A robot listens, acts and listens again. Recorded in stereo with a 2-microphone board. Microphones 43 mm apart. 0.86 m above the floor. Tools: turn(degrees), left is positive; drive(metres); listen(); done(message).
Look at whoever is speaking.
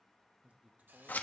turn(degrees=-40)
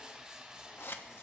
listen()
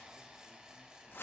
listen()
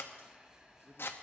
turn(degrees=-90)
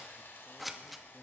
listen()
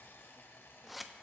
listen()
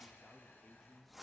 done("Facing the man speaking.")